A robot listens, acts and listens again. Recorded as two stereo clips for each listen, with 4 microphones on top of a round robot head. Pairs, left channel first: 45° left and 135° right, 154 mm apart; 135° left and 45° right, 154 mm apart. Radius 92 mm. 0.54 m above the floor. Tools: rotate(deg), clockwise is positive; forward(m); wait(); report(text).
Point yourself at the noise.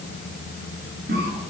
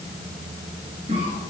rotate(100)
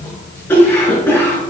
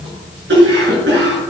rotate(30)
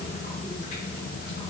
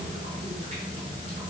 wait()
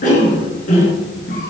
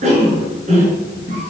report("Found it: a cough, straight ahead, over 4 m away.")